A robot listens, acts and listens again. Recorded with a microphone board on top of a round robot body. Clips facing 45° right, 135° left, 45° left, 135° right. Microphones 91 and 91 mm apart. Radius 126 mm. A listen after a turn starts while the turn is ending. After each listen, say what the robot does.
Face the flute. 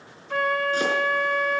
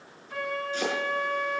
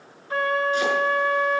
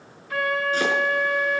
Turn 15° right.
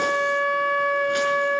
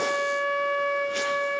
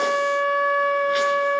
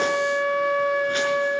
Found it: a flute, straight ahead, 1 to 2 m away.